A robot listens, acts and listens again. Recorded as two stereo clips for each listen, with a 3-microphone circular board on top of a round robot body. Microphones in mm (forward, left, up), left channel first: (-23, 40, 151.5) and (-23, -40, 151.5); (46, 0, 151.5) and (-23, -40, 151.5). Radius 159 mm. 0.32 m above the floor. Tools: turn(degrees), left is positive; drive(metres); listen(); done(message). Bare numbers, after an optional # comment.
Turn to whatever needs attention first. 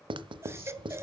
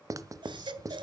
# The baby crying: 145° right.
turn(-145)
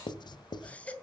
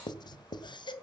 # The baby crying is now 15° left.
turn(15)
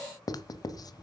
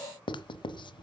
listen()
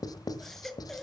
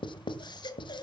done("Facing the baby crying, 1 to 2 m away.")